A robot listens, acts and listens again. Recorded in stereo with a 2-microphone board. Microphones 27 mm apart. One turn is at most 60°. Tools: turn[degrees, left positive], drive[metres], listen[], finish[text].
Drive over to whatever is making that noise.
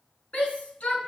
Thought: The shout: about 65° left or 115° left.
Action: turn[60]
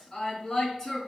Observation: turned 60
Thought: So it is at 15° left.
Action: turn[15]
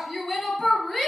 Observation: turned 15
Action: drive[1.0]
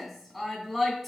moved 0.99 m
Thought: The shout is now 10° right.
Action: turn[-10]
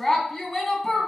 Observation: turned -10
Action: drive[1.0]
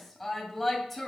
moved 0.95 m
Action: drive[1.0]
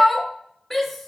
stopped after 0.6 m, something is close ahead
Action: finish[Arrived at the shout, straight ahead.]